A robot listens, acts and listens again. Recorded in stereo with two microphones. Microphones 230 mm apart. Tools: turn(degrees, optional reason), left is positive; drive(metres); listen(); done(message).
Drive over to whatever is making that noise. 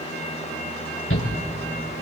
turn(degrees=60, reason="The shout: about 60° left or 120° left.")
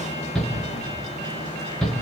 drive(metres=1.0)
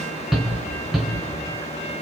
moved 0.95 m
drive(metres=1.0)
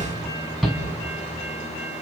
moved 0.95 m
drive(metres=1.0)
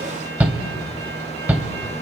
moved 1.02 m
turn(degrees=-10, reason="The shout is now 10° right.")
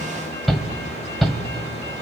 drive(metres=1.0)
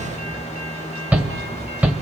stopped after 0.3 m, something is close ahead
turn(degrees=-10, reason="The shout is now 10° right.")
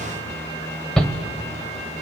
done("Arrived at the shout, straight ahead.")